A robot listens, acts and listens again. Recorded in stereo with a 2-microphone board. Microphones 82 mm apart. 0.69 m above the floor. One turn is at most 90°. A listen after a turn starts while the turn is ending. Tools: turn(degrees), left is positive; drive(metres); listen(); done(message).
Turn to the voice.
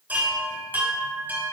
listen()
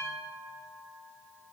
listen()
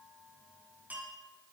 done("I can't make out anyone speaking to turn to.")